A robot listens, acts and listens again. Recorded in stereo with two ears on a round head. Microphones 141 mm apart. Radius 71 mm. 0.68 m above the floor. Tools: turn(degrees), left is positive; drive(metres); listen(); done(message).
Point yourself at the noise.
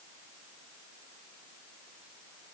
listen()
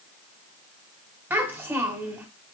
turn(degrees=-30)
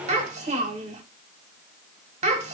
turn(degrees=-135)
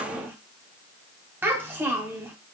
turn(degrees=-15)
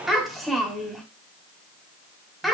done("Found it: a child speaking, straight ahead.")